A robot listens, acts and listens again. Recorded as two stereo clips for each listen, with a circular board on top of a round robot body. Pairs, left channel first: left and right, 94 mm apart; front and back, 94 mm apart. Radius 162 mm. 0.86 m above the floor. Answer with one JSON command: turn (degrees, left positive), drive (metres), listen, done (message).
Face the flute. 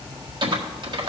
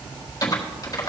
{"listen": true}
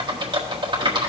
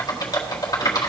{"listen": true}
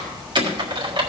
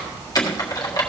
{"done": "I can't make out a flute, only typing on a keyboard."}